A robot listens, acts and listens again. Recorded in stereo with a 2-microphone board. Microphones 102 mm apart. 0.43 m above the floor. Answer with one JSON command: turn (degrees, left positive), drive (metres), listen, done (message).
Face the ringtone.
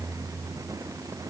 {"listen": true}
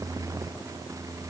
{"listen": true}
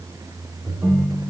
{"turn": -20}
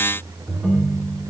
{"done": "Found it: a ringtone, straight ahead, 2 to 4 m away."}